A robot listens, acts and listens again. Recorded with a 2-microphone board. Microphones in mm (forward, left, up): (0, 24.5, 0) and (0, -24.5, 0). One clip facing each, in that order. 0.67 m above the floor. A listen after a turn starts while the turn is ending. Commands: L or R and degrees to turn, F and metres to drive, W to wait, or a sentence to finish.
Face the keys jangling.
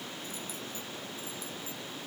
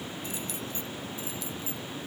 R90
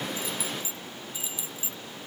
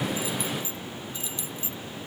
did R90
L15
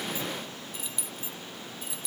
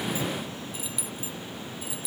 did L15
Found it: keys jangling, straight ahead.